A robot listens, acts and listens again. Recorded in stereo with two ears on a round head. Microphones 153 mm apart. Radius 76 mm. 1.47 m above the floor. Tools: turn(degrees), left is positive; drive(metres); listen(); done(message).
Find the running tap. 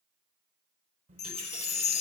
turn(degrees=-35)
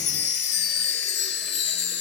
listen()
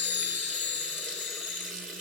done("Found it: a running tap, straight ahead, over 4 m away.")